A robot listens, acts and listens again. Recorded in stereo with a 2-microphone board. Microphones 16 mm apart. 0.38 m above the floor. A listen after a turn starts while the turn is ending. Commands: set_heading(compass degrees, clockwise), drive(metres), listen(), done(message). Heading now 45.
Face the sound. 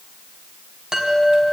set_heading(85)
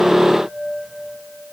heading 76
set_heading(176)
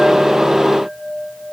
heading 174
done("Facing the chime, 2 to 4 m away.")